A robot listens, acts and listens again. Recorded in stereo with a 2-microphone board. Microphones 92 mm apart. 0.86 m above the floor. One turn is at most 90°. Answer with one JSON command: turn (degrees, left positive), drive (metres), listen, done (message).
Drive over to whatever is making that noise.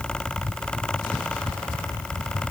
{"listen": true}
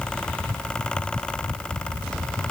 {"listen": true}
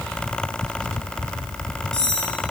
{"turn": 30}
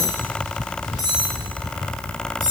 {"turn": 90}
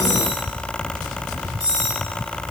{"turn": 40}
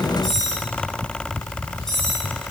{"drive": 1.0}
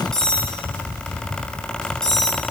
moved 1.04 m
{"drive": 1.0}
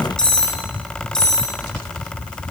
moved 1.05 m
{"turn": 10}
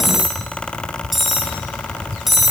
{"drive": 1.0}
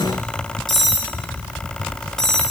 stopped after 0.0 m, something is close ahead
{"done": "I am next to the cutlery clinking."}